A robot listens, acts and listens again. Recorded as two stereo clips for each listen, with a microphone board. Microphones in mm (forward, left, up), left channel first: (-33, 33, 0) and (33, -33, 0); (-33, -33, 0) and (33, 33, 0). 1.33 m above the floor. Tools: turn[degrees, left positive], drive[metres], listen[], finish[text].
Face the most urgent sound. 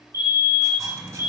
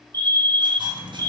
Thought: The fire alarm: 85° left.
Action: turn[85]
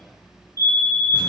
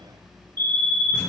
Action: finish[Facing the fire alarm.]